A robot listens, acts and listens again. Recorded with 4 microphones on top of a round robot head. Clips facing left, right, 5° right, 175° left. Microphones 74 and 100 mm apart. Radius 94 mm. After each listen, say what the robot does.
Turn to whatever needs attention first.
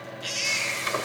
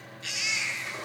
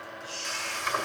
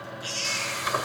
Turn 155° right.
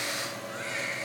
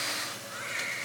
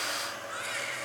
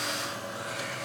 Keep listening.
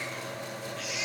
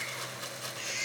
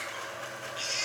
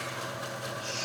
Facing the baby crying.